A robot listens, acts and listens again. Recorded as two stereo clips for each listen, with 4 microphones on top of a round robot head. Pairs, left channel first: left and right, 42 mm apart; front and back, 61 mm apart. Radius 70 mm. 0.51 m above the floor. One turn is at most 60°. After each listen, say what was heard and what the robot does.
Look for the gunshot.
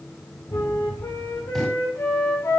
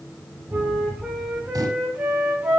The gunshot: 175° left. Turn 60° left.
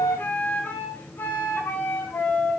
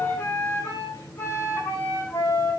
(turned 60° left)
Nothing new. It was at 115° left. Turn 60° left.
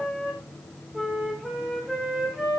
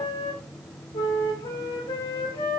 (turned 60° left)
Nothing new. It was at 55° left. Turn 55° left.
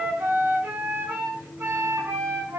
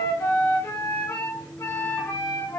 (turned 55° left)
I heard a gunshot from this way, but can't make it out now.